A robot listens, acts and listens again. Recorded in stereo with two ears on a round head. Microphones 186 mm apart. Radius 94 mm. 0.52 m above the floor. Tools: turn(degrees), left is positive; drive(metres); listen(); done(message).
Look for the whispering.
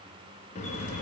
listen()
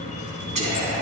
turn(degrees=-35)
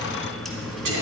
turn(degrees=-105)
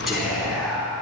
done("Found it: whispering, straight ahead.")